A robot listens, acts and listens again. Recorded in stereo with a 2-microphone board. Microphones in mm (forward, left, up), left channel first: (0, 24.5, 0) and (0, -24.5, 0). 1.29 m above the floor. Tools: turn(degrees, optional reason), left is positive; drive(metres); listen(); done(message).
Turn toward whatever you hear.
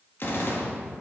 turn(degrees=55, reason="The gunshot: about 55° left or 125° left.")
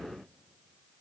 listen()
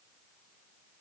done("I heard a gunshot, but can't make it out now. It was about straight ahead or 70° left.")